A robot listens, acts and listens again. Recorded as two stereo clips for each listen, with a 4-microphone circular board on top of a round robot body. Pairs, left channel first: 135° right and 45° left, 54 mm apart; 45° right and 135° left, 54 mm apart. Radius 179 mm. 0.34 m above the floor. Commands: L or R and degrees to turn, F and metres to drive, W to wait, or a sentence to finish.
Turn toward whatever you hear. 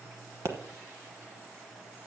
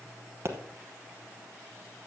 L85
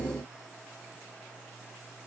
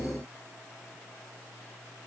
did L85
I heard a pop from this way, but can't make it out now.